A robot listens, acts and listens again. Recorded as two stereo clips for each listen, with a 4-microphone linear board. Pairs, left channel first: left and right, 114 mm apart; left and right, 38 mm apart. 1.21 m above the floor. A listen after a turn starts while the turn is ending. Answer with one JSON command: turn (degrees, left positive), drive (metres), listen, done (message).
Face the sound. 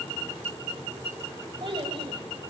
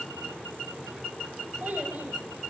{"turn": -50}
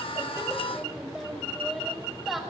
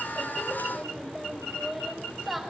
{"done": "Facing the child speaking."}